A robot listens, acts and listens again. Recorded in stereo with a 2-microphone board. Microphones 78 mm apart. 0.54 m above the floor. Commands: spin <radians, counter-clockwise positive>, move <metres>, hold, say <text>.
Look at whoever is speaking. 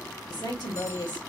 spin 1.13
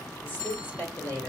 spin 0.52
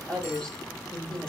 spin 0.17
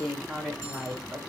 say Found it: a woman speaking, straight ahead, 1 to 2 m away.